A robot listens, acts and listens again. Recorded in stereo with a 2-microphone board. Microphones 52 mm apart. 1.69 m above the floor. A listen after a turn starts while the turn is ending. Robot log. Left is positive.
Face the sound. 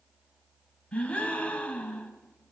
note: The gasp: about 20° left or 160° left.
cmd yaw +20
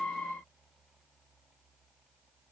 cmd idle
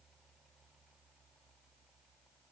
end: I heard a gasp, but can't make it out now. It was about straight ahead or 140° left.